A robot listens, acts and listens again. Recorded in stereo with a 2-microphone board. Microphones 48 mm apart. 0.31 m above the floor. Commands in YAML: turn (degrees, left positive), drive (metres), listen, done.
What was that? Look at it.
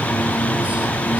listen: true
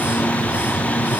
listen: true
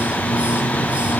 done: "I can't make out anything."